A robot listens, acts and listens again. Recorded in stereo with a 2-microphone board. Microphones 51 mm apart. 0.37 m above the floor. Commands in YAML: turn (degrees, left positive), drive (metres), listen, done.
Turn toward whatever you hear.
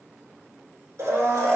turn: -70
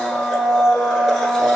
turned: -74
done: "Facing the blender."